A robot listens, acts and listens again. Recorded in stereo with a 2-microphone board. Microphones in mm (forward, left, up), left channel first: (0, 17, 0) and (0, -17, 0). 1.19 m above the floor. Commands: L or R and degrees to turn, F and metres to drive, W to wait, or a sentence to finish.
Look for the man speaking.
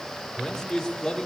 L30
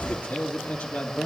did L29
L150
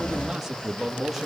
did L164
Facing the man speaking.